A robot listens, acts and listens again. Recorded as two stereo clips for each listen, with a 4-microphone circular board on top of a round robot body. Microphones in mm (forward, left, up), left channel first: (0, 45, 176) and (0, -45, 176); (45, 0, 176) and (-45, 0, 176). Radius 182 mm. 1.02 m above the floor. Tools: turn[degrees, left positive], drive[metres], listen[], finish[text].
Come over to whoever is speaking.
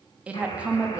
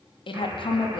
Thought: The woman speaking: 15° right.
Action: turn[-15]
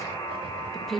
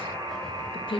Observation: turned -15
Action: drive[1.0]
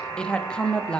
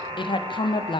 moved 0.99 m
Thought: The woman speaking is now 10° left.
Action: turn[10]
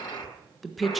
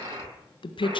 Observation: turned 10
Action: drive[1.0]
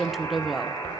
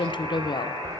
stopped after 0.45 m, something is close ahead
Action: finish[I am next to the woman speaking.]